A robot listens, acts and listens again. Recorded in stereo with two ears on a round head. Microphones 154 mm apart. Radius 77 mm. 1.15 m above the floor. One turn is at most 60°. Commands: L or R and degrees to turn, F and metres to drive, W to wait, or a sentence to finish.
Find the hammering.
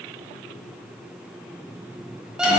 W
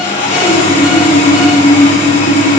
W
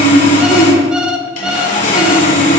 I can't make out hammering to turn to.